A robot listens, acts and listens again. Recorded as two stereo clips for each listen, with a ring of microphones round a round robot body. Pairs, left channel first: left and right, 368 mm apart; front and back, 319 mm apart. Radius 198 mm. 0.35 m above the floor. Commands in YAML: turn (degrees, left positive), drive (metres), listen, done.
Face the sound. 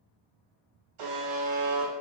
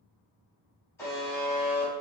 turn: -85
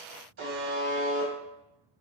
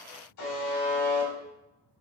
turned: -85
turn: -35
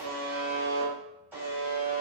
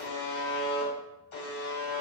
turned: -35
done: "Facing the buzzer, 1 to 2 m away."